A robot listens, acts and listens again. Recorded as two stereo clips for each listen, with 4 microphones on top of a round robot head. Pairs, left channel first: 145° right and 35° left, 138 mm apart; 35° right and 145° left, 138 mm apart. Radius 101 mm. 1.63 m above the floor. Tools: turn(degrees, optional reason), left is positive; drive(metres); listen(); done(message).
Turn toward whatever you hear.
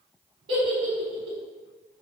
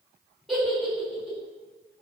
turn(degrees=55, reason="The giggle: 55° left.")
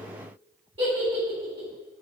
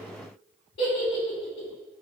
turn(degrees=-15, reason="The giggle is now 15° right.")
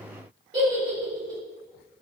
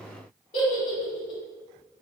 done("Facing the giggle.")